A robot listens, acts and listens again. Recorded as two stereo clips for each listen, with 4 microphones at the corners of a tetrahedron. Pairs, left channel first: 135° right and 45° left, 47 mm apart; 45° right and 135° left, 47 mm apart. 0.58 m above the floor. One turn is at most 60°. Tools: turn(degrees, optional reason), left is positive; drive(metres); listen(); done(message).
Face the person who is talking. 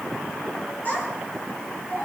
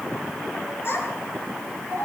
turn(degrees=-60, reason="The child speaking: 85° right.")
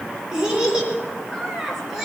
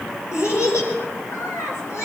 turn(degrees=-40, reason="The child speaking is now 40° right.")
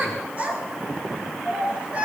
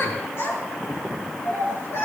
turn(degrees=-20, reason="The child speaking is now 20° right.")
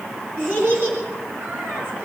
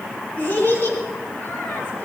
done("Facing the child speaking.")